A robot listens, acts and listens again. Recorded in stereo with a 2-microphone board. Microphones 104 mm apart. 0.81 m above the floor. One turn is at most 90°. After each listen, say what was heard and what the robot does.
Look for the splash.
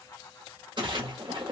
The splash: about 50° right or 130° right. Turn 50° right.
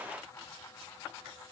Keep listening.
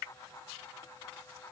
I heard a splash, but can't make it out now. It was about straight ahead or 80° right.